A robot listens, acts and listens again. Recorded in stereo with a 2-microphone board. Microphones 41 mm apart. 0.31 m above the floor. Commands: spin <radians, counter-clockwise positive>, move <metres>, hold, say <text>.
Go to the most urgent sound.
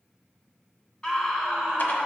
spin 0.35
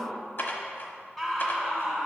move 1.0
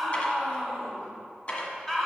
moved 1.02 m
spin 0.17
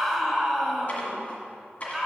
move 1.0
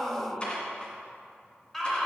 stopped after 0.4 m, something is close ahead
say I am next to the scream.